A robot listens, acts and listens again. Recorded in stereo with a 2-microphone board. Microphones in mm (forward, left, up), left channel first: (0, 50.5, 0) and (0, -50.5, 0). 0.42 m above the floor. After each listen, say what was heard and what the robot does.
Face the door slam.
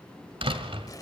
The door slam: about 60° right or 120° right. Turn 60° right.
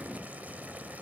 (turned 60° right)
Keep listening.
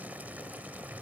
I heard a door slam, but can't make it out now. It was about straight ahead or 60° right.